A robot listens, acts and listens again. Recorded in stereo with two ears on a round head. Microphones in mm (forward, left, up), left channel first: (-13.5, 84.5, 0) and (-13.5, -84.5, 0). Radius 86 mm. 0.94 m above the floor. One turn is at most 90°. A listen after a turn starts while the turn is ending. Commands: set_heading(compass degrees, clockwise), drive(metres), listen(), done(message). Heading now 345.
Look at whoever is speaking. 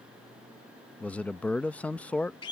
set_heading(315)
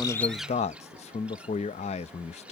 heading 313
set_heading(223)
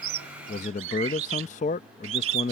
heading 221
set_heading(176)
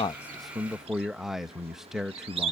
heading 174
done("Found it: a man speaking, straight ahead.")